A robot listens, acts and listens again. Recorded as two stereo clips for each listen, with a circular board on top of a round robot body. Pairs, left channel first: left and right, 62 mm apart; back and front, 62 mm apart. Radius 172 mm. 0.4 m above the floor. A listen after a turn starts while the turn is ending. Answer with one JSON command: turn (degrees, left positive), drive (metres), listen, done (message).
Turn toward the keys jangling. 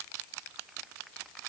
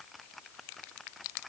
{"listen": true}
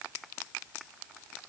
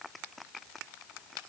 {"listen": true}
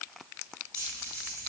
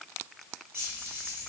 {"turn": -60}
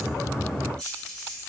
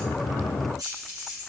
{"turn": 10}
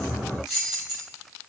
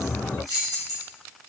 {"done": "Found it: keys jangling, straight ahead, 1 to 2 m away."}